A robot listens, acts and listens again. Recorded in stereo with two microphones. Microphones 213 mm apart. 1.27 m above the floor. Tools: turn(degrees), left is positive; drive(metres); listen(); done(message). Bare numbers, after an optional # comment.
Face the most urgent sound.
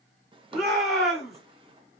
turn(30)
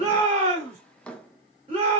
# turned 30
# So it is at 30° right.
turn(-30)
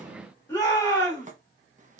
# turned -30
# The shout is now 15° left.
turn(15)
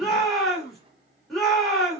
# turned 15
done("Facing the shout, 2 to 4 m away.")